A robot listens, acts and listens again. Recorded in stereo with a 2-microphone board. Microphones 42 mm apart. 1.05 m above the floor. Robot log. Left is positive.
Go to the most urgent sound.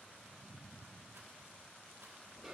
cmd idle
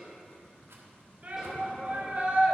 note: The shout: about 40° right or 140° right.
cmd yaw -40
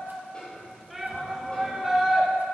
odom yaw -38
cmd fwd 1.0
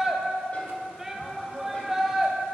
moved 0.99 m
note: The shout is now 10° right.
cmd yaw -10
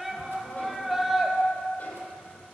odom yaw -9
cmd fwd 1.0
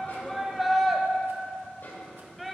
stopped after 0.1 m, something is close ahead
end: I am next to the shout.